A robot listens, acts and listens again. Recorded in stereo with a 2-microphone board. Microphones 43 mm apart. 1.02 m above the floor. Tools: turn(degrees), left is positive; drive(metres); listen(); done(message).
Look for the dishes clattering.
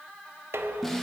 turn(degrees=-90)
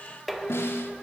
done("Facing the dishes clattering.")